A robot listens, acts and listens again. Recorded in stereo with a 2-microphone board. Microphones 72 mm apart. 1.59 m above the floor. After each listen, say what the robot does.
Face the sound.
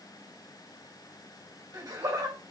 Turn 90° right.
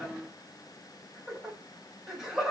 Facing the laughter, 2 to 4 m away.